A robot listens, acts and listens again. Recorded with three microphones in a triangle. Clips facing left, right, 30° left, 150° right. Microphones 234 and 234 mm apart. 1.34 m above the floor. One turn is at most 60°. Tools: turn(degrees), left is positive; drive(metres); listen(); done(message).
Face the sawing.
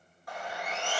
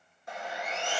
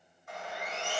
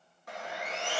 turn(degrees=-60)
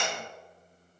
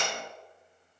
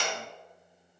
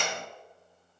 turn(degrees=-60)
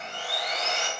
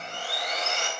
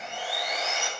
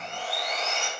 turn(degrees=-50)
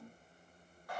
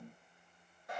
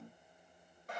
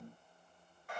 listen()
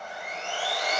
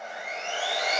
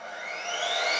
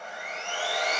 turn(degrees=-25)
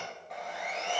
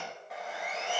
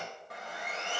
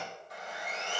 done("Facing the sawing, 2 to 4 m away.")